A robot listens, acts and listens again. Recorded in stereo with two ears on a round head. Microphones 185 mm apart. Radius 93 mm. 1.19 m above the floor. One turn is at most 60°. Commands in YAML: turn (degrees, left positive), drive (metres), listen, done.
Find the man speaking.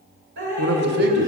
turn: -60
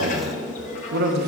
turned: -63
turn: -55
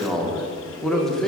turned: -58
done: "Found it: a man speaking, straight ahead, under 1 m away."